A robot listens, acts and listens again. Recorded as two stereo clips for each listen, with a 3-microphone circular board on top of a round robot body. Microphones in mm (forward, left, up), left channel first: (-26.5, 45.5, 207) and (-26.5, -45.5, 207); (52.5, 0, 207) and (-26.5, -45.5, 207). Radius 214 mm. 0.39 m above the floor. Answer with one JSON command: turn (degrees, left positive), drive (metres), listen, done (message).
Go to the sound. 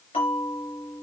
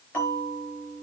{"turn": 95}
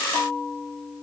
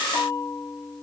{"drive": 1.0}
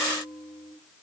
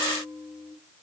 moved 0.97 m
{"drive": 1.0}
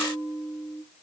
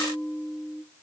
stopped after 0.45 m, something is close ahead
{"done": "Blocked. The bell is further on, straight ahead."}